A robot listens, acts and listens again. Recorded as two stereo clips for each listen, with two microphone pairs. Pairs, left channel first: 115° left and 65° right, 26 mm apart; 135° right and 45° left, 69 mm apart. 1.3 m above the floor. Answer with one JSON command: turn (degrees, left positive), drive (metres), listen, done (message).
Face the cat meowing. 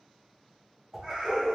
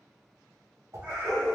{"turn": -30}
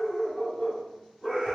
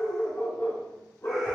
{"listen": true}
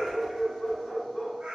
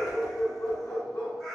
{"turn": -55}
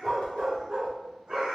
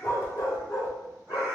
{"turn": -20}
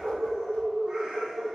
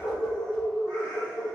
{"listen": true}
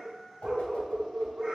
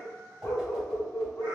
{"done": "Facing the cat meowing."}